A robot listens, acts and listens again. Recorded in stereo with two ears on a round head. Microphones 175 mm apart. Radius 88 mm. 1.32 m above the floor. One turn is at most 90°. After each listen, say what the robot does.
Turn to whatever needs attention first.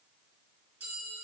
Keep listening.
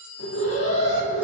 Turn 70° left.
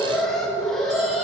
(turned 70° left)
Facing the alarm, 2 to 4 m away.